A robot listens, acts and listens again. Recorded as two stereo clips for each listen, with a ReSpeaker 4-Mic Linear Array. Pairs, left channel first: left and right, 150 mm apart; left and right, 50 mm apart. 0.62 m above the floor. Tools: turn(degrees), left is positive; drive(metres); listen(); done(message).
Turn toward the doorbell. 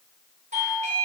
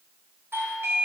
turn(degrees=-55)
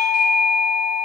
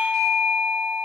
done("Facing the doorbell.")